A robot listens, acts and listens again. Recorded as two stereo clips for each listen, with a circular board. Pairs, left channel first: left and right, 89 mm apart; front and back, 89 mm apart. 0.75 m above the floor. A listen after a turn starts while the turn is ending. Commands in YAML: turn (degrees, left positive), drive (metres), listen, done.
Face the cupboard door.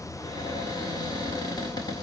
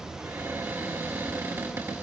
turn: 120
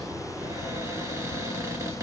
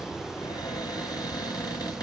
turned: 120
turn: -35
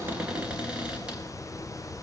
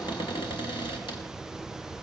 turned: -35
turn: -10
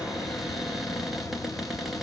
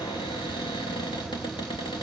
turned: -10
done: "Facing the cupboard door, 2 to 4 m away."